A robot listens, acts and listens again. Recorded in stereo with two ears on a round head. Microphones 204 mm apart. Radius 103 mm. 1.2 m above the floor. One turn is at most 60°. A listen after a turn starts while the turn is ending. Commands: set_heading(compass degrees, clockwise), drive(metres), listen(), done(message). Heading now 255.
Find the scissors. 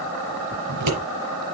set_heading(315)
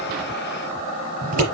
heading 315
set_heading(350)
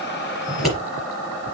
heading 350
done("Found it: scissors, straight ahead, over 4 m away.")